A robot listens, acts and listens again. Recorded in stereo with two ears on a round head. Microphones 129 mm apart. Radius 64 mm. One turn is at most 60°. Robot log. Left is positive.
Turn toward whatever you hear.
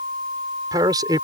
note: The man speaking: about 25° right or 155° right.
cmd yaw -25
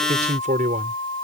note: So it is at 125° right.
cmd yaw -60
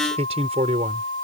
note: The man speaking is now 45° right.
cmd yaw -45
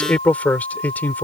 note: The man speaking is now 10° left.
cmd yaw +10
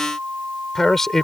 end: Found it: a man speaking, straight ahead.